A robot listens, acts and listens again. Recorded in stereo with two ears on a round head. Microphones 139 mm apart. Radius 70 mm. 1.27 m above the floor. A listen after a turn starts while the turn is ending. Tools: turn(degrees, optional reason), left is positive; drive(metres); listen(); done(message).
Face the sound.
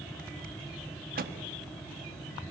turn(degrees=-60, reason="The rattle: about 60° right or 120° right.")
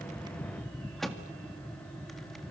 done("Found it: a rattle, straight ahead.")